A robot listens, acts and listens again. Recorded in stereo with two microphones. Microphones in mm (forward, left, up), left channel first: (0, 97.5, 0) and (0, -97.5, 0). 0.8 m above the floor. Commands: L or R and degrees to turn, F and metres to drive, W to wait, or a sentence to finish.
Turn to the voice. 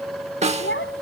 L90
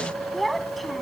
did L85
Found it: a child speaking, straight ahead.